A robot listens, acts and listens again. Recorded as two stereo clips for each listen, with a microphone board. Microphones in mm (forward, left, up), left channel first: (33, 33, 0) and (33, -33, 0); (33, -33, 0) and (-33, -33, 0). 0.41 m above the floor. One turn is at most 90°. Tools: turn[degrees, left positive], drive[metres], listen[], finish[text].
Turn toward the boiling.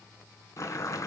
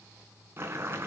Thought: The boiling: 125° left.
Action: turn[90]
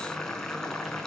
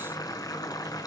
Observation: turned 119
Action: finish[Facing the boiling.]